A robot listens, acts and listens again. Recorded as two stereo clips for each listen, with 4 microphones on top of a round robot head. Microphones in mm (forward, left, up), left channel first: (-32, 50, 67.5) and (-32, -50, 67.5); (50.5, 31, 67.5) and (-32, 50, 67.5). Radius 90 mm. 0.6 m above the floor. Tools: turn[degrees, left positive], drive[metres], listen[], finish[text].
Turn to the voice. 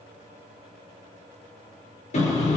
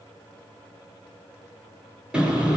Action: listen[]
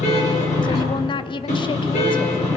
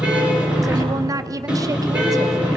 Thought: The woman speaking: 125° left.
Action: turn[125]
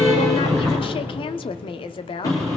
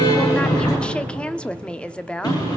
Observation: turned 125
Thought: The woman speaking is now 65° left.
Action: turn[65]
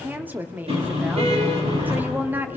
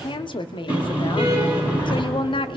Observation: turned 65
Thought: The woman speaking is now 20° right.
Action: turn[-20]
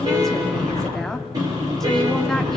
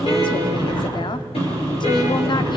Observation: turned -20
Action: finish[Found it: a woman speaking, straight ahead, 1 to 2 m away.]